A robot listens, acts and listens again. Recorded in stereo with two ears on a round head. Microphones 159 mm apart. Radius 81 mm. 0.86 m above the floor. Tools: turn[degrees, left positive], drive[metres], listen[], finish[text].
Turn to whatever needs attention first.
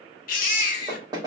Thought: The baby crying: about 55° left or 125° left.
Action: turn[55]
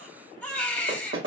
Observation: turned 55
Thought: So it is at 10° left.
Action: turn[10]
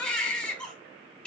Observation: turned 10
Thought: The baby crying is now 10° left.
Action: turn[10]
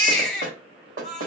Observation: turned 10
Action: finish[Facing the baby crying, under 1 m away.]